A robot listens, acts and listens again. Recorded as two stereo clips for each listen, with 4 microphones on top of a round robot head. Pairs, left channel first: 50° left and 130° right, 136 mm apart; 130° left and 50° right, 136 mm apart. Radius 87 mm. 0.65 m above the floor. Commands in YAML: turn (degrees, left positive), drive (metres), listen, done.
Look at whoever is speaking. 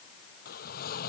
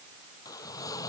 listen: true
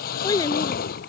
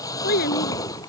turn: 115
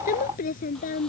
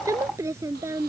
turn: 25
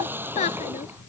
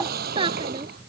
turn: 10
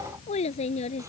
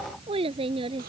done: "Found it: a child speaking, straight ahead."